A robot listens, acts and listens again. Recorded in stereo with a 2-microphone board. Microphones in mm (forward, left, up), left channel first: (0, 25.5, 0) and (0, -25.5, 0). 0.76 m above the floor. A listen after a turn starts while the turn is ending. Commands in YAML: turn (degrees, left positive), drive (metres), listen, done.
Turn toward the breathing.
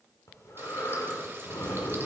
turn: 75
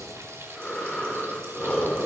turn: 15
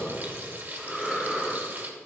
done: "Found it: breathing, straight ahead."